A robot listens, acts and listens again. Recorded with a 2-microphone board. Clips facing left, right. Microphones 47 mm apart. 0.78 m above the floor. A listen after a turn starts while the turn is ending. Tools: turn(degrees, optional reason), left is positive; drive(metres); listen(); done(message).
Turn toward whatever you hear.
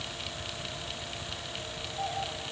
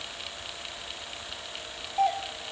turn(degrees=-60, reason="The doorbell: about 60° right or 120° right.")
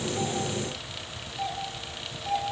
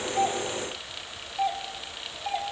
turn(degrees=-40, reason="So it is at 40° right.")
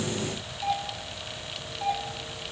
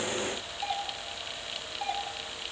turn(degrees=-10, reason="The doorbell is now 10° right.")
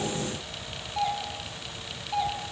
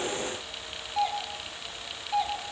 done("Facing the doorbell, 2 to 4 m away.")